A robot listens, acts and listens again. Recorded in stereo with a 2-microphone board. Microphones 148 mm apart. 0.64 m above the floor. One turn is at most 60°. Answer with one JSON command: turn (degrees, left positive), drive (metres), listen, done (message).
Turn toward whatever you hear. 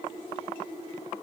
{"listen": true}
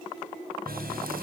{"turn": -60}
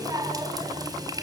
{"turn": -25}
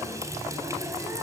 {"turn": -20}
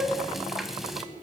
{"done": "Found it: a running tap, straight ahead."}